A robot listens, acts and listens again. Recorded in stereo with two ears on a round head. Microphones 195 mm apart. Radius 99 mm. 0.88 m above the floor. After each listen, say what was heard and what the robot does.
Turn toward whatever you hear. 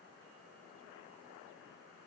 Keep listening.
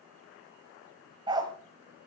The dog barking: about 20° right or 160° right. Turn 20° right.
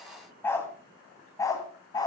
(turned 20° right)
So it is at 15° left. Turn 15° left.
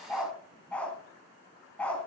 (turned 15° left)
Found it: a dog barking, straight ahead, 2 to 4 m away.